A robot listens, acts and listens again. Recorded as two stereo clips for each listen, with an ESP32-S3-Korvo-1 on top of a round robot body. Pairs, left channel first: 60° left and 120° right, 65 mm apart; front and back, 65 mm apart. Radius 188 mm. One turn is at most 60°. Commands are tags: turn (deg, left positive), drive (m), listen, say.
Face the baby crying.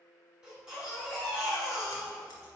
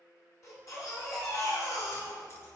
<turn deg="-40"/>
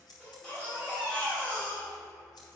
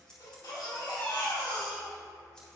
<turn deg="-15"/>
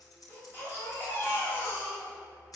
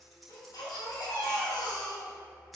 <say>Found it: a baby crying, straight ahead.</say>